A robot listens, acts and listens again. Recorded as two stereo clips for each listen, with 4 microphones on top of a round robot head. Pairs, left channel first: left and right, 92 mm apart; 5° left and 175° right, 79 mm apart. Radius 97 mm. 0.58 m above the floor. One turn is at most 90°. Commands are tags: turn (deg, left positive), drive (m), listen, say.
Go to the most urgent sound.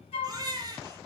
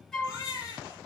<turn deg="-45"/>
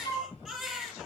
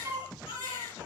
<drive m="1.0"/>
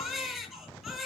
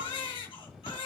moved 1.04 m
<drive m="1.0"/>
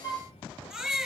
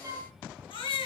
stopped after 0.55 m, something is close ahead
<say>Blocked. The baby crying is further on, straight ahead.</say>